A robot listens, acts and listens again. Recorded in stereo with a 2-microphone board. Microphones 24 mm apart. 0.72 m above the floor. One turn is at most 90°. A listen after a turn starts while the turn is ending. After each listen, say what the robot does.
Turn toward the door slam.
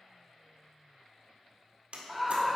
Turn 65° right.
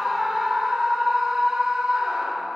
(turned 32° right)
Keep listening.
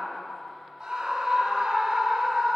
I heard a door slam, but can't make it out now. It was about 30° right or 85° right.